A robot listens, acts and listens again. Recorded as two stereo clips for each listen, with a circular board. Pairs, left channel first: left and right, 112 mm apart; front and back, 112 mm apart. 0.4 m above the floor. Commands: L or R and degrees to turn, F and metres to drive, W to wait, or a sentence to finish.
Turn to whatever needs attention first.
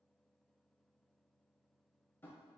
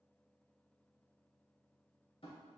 W
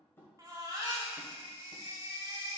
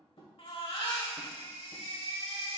R30
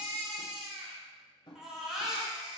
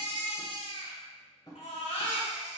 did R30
Found it: a baby crying, straight ahead.